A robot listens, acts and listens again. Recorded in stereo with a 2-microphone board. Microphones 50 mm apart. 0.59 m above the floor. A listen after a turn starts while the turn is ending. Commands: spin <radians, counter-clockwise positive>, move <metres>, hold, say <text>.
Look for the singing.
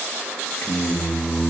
spin 0.87
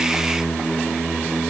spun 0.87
spin 0.17
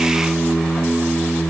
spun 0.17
spin 0.26
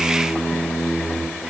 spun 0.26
say Facing the singing, 2 to 4 m away.